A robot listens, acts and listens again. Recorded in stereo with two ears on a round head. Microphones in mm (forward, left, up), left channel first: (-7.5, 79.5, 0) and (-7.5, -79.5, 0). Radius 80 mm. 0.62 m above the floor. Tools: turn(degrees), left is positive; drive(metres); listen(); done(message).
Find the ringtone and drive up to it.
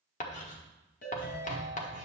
turn(degrees=55)
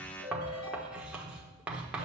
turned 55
turn(degrees=70)
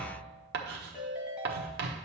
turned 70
drive(metres=1.0)
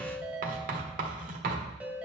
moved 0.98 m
drive(metres=1.0)
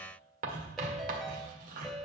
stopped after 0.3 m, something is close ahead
done("I am next to the ringtone.")